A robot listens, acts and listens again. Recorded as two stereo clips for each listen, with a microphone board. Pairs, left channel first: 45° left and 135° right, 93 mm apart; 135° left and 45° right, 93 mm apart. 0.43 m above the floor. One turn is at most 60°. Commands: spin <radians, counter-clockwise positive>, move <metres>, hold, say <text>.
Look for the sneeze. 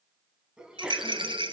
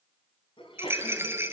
spin 1.05
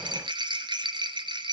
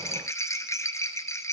spin 1.05
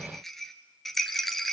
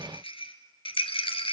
spin 0.44
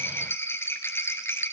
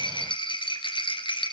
say Facing where the sneeze came from. I can't hear it now.